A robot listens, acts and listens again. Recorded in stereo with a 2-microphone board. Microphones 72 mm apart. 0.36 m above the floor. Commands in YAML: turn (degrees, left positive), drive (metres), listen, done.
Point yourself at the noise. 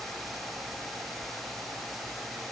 listen: true
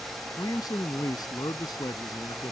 turn: 70
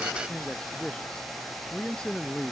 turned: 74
turn: 15
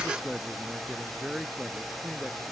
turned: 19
done: "Found it: a man speaking, straight ahead."